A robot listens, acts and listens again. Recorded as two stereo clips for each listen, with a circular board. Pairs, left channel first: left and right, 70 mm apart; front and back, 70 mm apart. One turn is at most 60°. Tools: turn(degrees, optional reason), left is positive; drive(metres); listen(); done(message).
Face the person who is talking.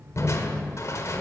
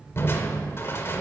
listen()
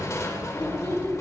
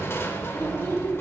turn(degrees=60, reason="The child speaking: 155° left.")
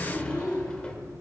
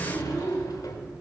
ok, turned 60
turn(degrees=60, reason="The child speaking is now 120° left.")
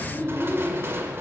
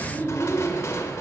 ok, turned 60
turn(degrees=60, reason="The child speaking is now 60° left.")
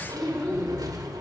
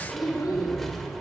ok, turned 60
turn(degrees=15, reason="The child speaking is now 15° left.")
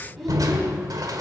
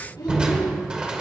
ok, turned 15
done("Found it: a child speaking, straight ahead.")